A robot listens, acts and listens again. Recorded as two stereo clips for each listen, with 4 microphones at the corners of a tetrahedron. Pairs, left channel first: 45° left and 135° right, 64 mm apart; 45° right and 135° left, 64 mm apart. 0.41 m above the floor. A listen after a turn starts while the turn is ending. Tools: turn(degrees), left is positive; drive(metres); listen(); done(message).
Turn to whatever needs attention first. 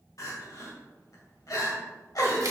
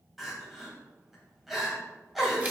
turn(degrees=50)
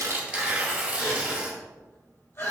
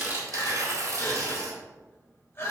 done("Facing the crying.")